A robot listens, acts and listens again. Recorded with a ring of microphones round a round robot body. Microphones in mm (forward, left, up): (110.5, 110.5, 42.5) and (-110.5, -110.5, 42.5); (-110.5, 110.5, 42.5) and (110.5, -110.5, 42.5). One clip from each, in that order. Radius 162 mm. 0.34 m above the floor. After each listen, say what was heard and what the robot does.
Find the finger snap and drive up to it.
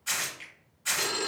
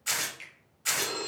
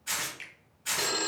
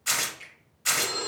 The finger snap: 170° left. Turn 170° left.
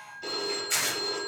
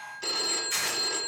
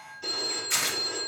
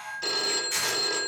Keep listening.
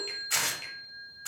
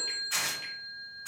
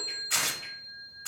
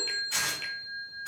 Keep listening.
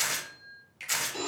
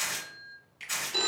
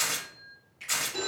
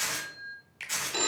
The finger snap is now 20° right. Turn 20° right.
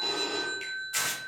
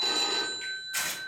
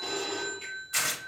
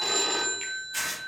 Keep listening.
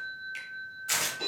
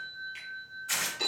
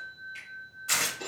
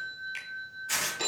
Keep listening.
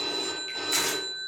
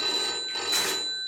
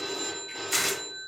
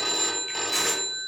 Facing where the finger snap came from. I can't hear it now. I did not reach it.